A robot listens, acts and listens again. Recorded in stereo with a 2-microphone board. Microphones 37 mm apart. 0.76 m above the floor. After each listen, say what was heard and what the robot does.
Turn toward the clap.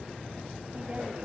Keep listening.
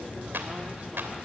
The clap: about 75° right or 105° right. Turn 75° right.
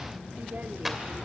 Facing the clap, 2 to 4 m away.